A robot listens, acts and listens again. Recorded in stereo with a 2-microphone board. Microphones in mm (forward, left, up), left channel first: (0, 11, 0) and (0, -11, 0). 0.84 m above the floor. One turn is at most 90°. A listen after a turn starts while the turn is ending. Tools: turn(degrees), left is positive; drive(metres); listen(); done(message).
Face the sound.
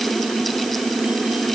listen()
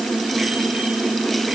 listen()
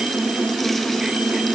done("I can't make out anything to turn to.")